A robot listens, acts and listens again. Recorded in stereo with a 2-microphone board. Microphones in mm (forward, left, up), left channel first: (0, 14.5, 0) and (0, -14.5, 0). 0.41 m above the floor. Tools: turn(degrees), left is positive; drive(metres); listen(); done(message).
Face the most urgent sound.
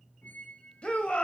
turn(degrees=45)
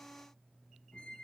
listen()
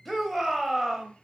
done("Found it: a shout, straight ahead.")